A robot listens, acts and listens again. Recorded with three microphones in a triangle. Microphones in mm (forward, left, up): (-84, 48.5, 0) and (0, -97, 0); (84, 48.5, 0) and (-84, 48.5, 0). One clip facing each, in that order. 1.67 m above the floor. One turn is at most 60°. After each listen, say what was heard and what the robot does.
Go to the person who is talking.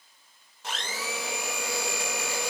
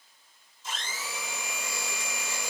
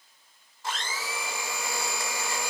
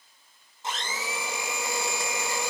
Keep listening.
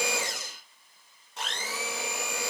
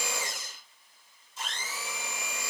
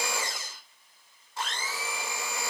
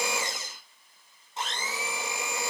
Keep listening.
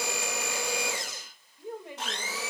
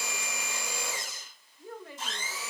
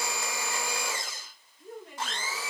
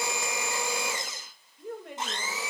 The woman speaking: 170° right. Turn 60° right.
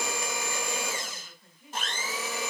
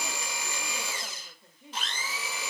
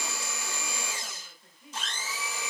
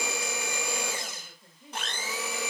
The woman speaking is now 120° right. Turn 60° right.
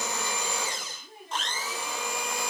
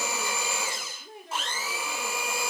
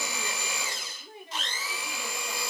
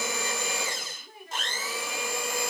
The woman speaking is now 65° right. Turn 60° right.
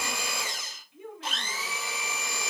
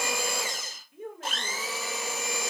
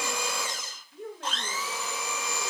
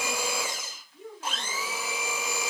The woman speaking is now 20° right. Turn 20° right.
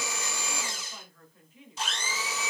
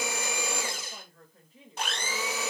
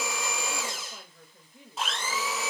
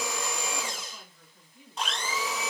The woman speaking is now 10° right. Turn 10° right.
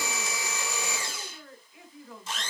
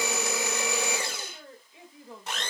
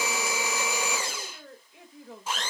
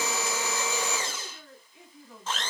Drive 1.0 m forward.
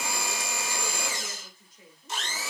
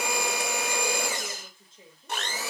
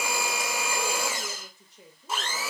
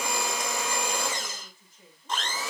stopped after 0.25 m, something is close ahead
Something is in my way. I am facing the woman speaking but have not reached it.